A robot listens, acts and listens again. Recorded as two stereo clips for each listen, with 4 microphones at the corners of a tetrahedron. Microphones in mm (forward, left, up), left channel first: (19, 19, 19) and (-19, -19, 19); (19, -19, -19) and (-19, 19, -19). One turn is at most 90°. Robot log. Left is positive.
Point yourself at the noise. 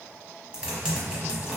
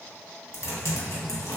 note: The typing on a keyboard: 60° right.
cmd yaw -60
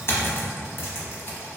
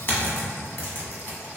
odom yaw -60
end: Facing the typing on a keyboard, under 1 m away.